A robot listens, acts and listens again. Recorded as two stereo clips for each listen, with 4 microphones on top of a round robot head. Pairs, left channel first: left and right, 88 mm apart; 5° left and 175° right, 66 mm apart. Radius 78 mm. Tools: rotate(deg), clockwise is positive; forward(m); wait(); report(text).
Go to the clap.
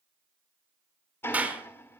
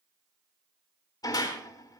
rotate(20)
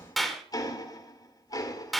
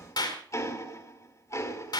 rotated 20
forward(1.0)
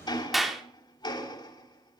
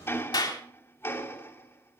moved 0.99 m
forward(1.0)
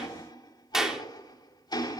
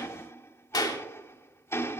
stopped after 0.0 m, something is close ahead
report("Something is in my way. I am facing the clap but have not reached it.")